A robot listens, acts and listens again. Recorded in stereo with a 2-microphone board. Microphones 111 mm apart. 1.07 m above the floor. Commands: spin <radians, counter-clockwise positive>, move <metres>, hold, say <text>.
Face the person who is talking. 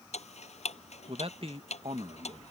spin -1.05
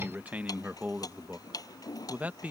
spin -0.26
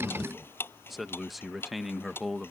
say Found it: a man speaking, straight ahead.